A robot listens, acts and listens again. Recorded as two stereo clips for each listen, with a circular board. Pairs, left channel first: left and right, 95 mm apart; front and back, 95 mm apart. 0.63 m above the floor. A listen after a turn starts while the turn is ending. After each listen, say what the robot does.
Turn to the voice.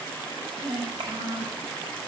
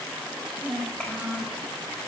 Turn 80° right.
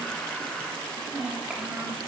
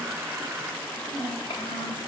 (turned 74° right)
Facing the child speaking.